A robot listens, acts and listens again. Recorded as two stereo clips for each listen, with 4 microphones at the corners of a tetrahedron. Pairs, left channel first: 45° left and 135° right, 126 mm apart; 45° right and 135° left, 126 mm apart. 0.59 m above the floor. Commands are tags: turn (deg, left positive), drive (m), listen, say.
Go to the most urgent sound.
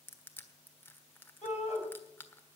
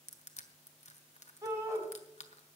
<turn deg="70"/>
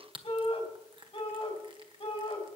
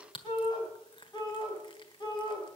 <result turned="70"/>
<drive m="1.0"/>
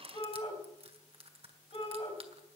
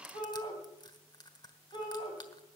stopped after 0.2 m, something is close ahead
<say>Something is in my way. I am facing the shout but have not reached it.</say>